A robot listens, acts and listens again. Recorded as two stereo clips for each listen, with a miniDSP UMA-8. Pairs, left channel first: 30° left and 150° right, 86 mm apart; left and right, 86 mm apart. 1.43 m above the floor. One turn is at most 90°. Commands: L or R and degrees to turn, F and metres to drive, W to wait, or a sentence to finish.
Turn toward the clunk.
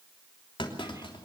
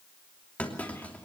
L15
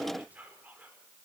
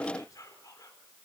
I heard a clunk from this way, but can't make it out now.